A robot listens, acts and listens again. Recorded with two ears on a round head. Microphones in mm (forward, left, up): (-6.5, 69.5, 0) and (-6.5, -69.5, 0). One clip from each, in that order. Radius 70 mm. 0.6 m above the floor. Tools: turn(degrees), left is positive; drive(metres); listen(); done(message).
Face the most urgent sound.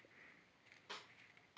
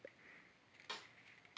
listen()
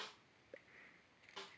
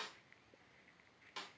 listen()
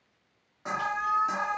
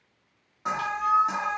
turn(degrees=-30)
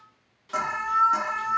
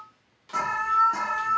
turn(degrees=25)
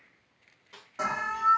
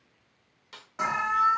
done("Facing the alarm, under 1 m away.")